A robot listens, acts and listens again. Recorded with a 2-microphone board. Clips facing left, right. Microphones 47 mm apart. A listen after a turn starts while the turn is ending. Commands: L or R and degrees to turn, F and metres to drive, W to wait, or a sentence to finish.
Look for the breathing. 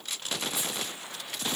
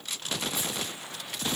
W
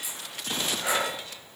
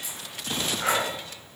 R55
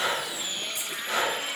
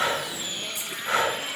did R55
R65
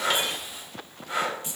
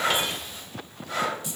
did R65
L15
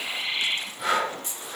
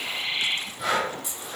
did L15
Found it: breathing, straight ahead.